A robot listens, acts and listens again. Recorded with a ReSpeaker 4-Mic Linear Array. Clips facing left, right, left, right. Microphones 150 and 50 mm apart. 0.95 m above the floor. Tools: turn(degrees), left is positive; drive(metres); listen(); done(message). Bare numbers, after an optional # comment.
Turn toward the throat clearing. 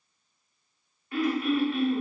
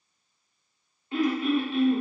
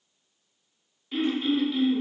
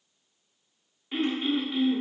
# The throat clearing: about 20° right or 160° right.
turn(-20)
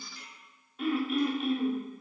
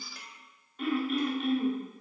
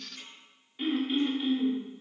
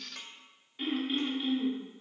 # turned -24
done("Facing the throat clearing, 1 to 2 m away.")